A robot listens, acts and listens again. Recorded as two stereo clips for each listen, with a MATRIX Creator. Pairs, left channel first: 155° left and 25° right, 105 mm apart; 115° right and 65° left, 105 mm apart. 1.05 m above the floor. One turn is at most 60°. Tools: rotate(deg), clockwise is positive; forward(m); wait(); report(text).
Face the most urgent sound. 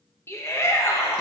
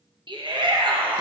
rotate(-60)
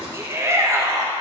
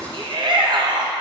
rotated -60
rotate(-35)
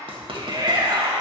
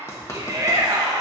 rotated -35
rotate(-20)
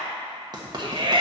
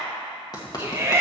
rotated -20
report("Facing the shout.")